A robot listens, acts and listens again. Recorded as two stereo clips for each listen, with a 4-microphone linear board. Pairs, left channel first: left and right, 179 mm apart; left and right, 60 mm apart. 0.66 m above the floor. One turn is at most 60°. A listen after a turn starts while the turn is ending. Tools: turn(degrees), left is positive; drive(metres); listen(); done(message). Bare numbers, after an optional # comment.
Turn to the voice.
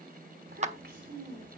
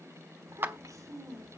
turn(-60)
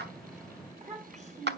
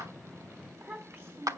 # So it is at 40° right.
turn(-40)
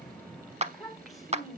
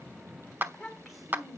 done("Facing the child speaking, 2 to 4 m away.")